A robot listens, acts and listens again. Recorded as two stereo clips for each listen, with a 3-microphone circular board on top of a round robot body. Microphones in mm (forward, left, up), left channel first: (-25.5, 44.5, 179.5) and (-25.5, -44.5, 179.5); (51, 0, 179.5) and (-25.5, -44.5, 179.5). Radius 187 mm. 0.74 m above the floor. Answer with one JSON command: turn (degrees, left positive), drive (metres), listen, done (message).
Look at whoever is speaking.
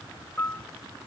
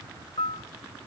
{"listen": true}
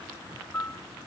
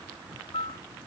{"listen": true}
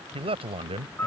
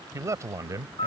{"turn": -95}
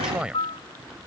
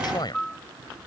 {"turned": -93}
{"turn": -10}
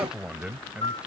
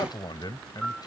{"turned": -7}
{"turn": -10}
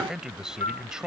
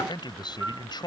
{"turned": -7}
{"done": "Found it: a man speaking, straight ahead."}